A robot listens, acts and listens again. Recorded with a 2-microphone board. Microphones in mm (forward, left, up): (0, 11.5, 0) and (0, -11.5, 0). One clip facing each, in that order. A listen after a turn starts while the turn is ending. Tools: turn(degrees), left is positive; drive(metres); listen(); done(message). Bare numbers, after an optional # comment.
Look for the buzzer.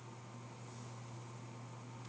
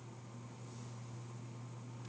listen()
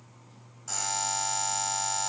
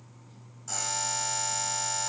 turn(30)
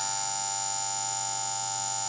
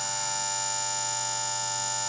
# So it is at 15° right.
turn(-15)
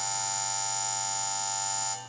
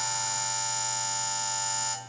done("Facing the buzzer, over 4 m away.")